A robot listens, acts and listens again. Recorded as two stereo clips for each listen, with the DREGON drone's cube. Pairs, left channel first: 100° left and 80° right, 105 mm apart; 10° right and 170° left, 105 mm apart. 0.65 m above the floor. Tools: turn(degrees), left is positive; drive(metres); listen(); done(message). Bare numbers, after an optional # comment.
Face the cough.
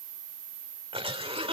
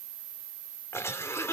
# The cough: 70° right.
turn(-70)
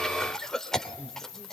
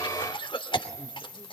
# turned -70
# The cough is now 15° left.
turn(15)
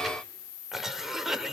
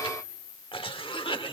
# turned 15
done("Facing the cough, 2 to 4 m away.")